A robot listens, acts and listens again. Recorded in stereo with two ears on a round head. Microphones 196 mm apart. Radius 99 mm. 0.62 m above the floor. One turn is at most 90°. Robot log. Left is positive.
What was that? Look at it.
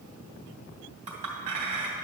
note: The clink: about 35° right or 145° right.
cmd yaw -35
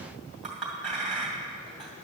end: Facing the clink, 2 to 4 m away.